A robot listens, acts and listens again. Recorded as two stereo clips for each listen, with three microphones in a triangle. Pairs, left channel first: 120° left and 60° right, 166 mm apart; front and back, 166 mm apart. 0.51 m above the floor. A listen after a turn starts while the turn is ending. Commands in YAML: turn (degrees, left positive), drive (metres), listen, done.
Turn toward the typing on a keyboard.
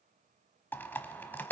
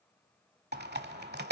turn: -160
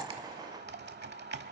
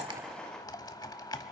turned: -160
turn: -70
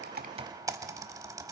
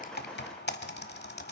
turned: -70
turn: 10
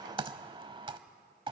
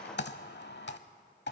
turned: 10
done: "Found it: typing on a keyboard, straight ahead, under 1 m away."